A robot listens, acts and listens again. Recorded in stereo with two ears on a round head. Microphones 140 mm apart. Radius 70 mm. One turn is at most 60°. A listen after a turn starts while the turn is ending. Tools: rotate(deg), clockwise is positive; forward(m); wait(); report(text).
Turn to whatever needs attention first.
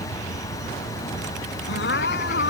rotate(-60)
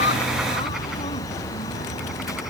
rotate(-30)
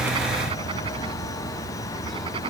wait()
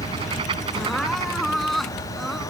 report("Facing the crying.")